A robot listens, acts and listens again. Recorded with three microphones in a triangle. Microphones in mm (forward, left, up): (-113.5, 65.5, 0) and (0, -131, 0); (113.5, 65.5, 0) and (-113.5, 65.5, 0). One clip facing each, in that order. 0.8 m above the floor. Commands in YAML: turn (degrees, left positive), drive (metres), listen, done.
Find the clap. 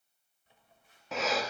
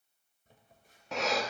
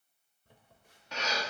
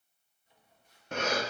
listen: true
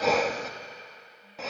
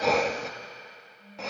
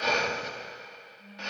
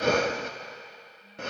listen: true
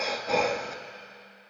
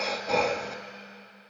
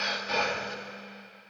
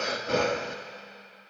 done: "I can't make out a clap, only breathing and a phone buzzing."